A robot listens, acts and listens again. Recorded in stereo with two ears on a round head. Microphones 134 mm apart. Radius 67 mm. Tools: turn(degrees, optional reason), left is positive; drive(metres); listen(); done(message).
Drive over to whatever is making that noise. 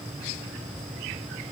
listen()
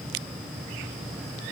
listen()
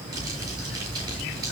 turn(degrees=-25, reason="The crumpling: about 25° right or 155° right.")
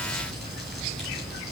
drive(metres=1.0)
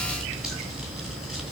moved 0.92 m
drive(metres=1.0)
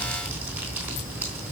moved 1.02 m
turn(degrees=-10, reason="The crumpling is now 10° right.")
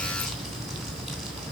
drive(metres=1.0)
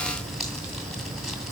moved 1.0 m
drive(metres=1.0)
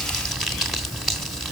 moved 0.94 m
drive(metres=1.0)
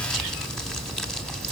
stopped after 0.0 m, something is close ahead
done("I am next to the crumpling.")